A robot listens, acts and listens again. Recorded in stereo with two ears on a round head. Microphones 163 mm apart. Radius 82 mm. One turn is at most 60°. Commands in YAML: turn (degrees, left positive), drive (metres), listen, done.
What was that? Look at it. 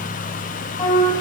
turn: 20
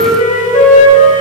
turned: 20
turn: 60
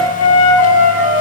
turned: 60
turn: 60
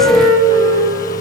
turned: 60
turn: 25
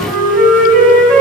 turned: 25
done: "Facing the flute, over 4 m away."